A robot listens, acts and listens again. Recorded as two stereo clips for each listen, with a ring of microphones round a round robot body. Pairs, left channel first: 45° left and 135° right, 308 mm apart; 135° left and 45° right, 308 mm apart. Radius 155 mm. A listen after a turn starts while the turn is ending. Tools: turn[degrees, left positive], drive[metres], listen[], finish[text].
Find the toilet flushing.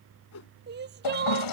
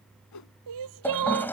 Thought: The toilet flushing: 50° left.
Action: turn[50]
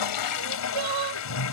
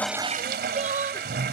Thought: The toilet flushing is now 15° left.
Action: turn[15]
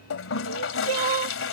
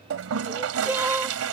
Action: finish[Facing the toilet flushing.]